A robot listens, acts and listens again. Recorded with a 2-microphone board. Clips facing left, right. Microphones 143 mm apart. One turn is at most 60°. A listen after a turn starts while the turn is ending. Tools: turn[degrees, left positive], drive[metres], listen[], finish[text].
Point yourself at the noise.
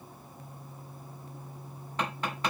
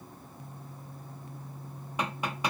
Action: turn[-30]
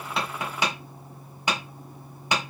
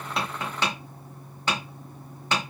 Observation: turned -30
Thought: So it is at 15° left.
Action: turn[15]
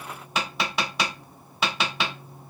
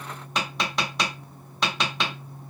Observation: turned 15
Action: finish[Found it: tapping, straight ahead, 1 to 2 m away.]